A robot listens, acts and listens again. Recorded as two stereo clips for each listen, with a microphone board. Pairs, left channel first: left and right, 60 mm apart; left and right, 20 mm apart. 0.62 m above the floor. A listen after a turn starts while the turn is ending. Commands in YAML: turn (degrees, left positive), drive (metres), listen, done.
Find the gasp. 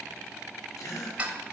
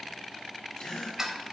turn: 75
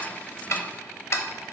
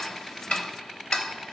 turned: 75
listen: true
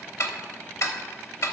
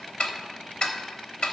done: "I heard a gasp, but can't make it out now. It was about straight ahead or 30° left."